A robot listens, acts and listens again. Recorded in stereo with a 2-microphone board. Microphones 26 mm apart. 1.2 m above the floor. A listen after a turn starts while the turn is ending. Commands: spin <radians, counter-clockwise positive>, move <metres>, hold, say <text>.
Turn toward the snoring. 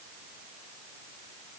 hold
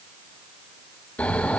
spin 1.57
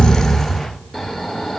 say Facing the snoring.